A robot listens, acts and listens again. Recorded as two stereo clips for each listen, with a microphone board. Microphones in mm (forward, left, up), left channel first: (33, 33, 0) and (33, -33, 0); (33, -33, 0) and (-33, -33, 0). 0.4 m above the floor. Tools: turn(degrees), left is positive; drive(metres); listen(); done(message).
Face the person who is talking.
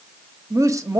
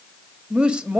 turn(degrees=-105)
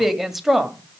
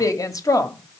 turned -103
done("Found it: a woman speaking, straight ahead.")